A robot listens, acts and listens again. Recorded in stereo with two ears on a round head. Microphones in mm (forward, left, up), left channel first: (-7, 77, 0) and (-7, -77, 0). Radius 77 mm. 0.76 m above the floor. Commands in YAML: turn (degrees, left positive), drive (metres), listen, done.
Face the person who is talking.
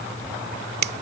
listen: true
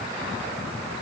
listen: true
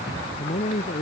turn: 40
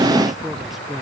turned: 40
done: "Facing the man speaking."